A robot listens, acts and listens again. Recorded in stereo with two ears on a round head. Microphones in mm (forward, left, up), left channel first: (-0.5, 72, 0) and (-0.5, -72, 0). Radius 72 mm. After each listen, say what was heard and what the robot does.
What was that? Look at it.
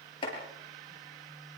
The chopping: about 35° left or 145° left. Turn 35° left.
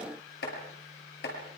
So it is at 110° left. Turn 110° left.
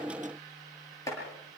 The chopping is now 20° left. Turn 20° left.
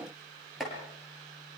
Found it: chopping, straight ahead, over 4 m away.